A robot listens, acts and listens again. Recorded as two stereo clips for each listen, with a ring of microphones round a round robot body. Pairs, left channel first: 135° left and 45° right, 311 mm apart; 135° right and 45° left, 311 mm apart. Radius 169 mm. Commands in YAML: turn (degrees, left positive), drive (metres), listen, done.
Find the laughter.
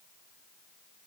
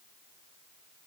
listen: true
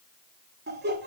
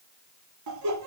turn: 15
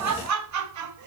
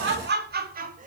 turn: -20
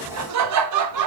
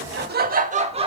turn: -30
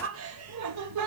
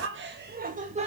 turn: -25
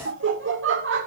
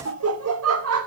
done: "Found it: laughter, straight ahead, 1 to 2 m away."